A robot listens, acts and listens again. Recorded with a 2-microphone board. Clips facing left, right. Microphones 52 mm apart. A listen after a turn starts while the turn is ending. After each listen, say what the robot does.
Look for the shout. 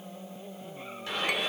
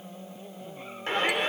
Turn 40° right.
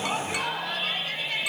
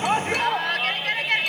Turn 95° right.
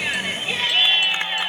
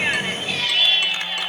Turn 30° left.
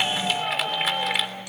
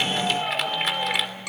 Facing the shout, 2 to 4 m away.